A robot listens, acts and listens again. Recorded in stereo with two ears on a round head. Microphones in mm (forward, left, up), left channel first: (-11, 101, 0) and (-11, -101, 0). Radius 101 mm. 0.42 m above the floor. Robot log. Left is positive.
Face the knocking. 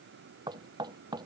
note: The knocking: about 20° right or 160° right.
cmd yaw -20
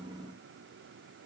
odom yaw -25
cmd idle
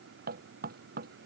note: So it is at 135° right.
cmd yaw -135
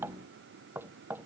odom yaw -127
note: The knocking is now 10° right.
cmd yaw -10
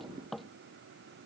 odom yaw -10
end: Facing the knocking.